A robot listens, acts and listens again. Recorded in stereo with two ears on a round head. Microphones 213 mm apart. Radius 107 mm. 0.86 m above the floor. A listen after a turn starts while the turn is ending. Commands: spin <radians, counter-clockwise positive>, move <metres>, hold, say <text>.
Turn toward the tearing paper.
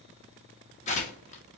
spin 0.52
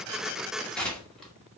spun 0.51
say Found it: tearing paper, straight ahead.